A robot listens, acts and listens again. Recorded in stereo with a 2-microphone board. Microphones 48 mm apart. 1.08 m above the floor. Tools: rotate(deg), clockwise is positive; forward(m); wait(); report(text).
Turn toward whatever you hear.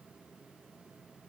wait()
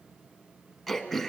rotate(-30)
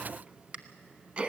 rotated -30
rotate(30)
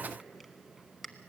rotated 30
report("Found it: throat clearing, straight ahead, 1 to 2 m away.")